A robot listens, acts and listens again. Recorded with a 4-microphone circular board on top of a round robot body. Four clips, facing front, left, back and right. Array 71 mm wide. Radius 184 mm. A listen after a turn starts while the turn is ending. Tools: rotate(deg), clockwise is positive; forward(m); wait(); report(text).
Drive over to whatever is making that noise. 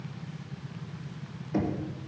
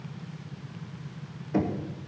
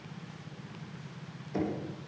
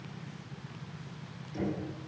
rotate(-65)
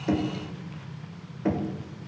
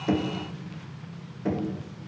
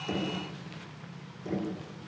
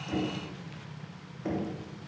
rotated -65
forward(1.0)
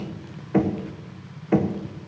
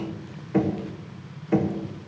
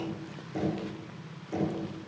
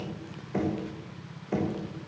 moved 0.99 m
rotate(-10)
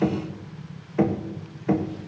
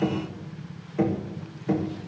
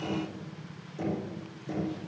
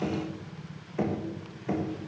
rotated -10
forward(1.0)
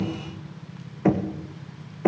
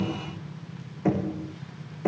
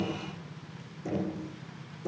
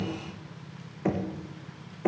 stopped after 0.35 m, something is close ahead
report("I am next to the knocking.")